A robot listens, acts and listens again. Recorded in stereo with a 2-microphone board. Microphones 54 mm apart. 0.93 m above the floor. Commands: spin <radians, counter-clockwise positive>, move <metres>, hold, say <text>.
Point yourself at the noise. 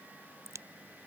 spin -1.31
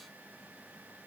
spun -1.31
hold
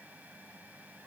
say I heard a crack, but can't make it out now. It was about straight ahead or 30° right.